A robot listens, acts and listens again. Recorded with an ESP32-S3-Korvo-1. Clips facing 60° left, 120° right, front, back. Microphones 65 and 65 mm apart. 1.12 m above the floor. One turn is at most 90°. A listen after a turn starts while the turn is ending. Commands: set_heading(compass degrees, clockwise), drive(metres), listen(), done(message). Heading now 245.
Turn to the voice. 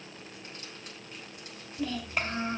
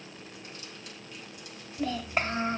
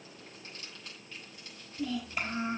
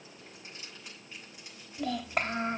set_heading(155)
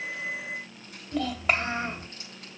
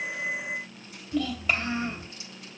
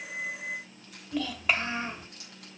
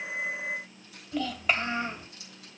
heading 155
set_heading(65)
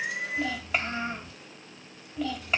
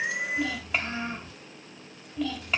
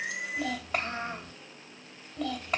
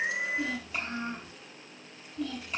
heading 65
set_heading(90)
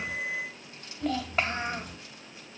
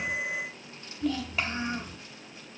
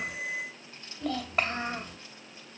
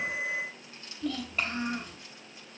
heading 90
set_heading(75)
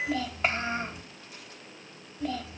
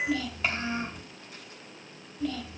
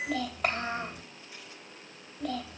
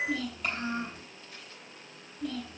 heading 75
done("Facing the child speaking.")